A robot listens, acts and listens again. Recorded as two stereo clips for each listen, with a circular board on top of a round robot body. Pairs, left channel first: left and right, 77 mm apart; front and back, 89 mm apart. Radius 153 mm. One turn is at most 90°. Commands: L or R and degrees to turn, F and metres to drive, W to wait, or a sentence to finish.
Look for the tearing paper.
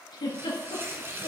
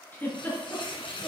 R30
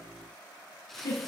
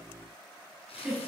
Facing the tearing paper, 1 to 2 m away.